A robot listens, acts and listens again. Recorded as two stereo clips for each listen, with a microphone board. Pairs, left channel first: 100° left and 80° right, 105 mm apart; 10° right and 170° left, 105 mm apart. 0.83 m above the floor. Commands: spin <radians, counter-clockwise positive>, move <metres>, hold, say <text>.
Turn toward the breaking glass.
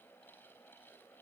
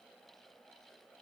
hold
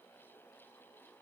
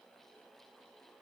hold
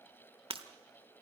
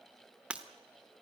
spin -1.92
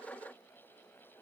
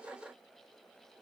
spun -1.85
say Facing where the breaking glass came from. I can't hear it now.